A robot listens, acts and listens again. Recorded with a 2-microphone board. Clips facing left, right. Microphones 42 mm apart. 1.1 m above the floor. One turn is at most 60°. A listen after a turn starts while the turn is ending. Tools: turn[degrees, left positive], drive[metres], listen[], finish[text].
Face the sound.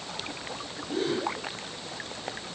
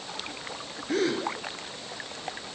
Thought: The gasp: about 70° right or 110° right.
Action: turn[-60]
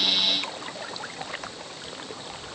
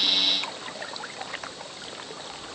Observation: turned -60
Action: listen[]
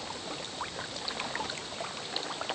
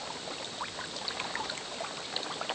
Action: finish[I heard a gasp, but can't make it out now. It was about 10° right or 50° right.]